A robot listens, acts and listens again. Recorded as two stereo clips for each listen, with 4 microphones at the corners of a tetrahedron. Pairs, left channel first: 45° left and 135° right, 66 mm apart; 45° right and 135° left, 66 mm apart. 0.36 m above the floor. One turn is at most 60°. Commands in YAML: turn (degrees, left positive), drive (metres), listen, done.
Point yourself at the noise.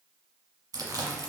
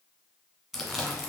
turn: -60
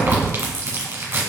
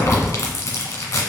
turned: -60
turn: -60
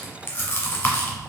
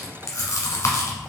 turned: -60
turn: -15
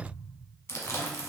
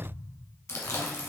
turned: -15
done: "Found it: chewing, straight ahead, 1 to 2 m away."